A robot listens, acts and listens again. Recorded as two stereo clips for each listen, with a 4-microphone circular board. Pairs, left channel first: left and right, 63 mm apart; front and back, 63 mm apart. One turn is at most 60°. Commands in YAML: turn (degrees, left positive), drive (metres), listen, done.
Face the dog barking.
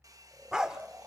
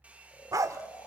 turn: -60
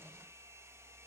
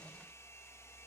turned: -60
turn: -60
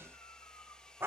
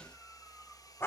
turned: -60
turn: -45
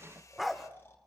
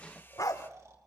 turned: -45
done: "Found it: a dog barking, straight ahead, 1 to 2 m away."